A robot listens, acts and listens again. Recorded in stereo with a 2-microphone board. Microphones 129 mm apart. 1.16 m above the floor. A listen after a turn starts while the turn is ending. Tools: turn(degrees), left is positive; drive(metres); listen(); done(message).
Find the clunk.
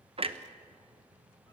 turn(degrees=-50)
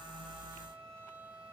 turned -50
listen()
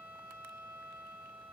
done("I heard a clunk, but can't make it out now. It was about straight ahead or 80° right.")